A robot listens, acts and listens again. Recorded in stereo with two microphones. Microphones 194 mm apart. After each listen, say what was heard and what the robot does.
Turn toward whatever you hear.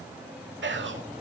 Turn 90° right.
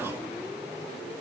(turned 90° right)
Keep listening.
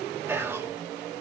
The whispering is now 10° right. Turn 10° right.
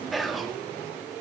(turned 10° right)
Facing the whispering.